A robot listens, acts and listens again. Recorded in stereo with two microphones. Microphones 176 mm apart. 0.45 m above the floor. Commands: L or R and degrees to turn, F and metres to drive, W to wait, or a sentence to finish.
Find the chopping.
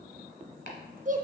L90
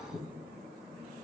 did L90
Facing the chopping, 1 to 2 m away.